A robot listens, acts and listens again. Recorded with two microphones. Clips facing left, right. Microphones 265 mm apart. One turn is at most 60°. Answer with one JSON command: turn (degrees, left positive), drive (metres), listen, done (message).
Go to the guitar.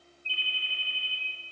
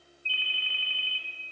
{"listen": true}
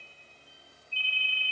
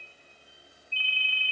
{"listen": true}
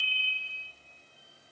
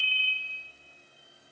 {"done": "I can't make out a guitar to turn to."}